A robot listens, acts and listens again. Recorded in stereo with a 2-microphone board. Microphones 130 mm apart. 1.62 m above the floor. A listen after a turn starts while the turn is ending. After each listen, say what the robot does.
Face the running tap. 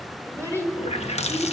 Turn 55° left.
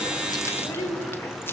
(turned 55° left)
Keep listening.
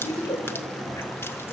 Turn 20° left.
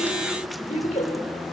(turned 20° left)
Keep listening.
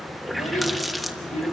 Found it: a running tap, straight ahead, 1 to 2 m away.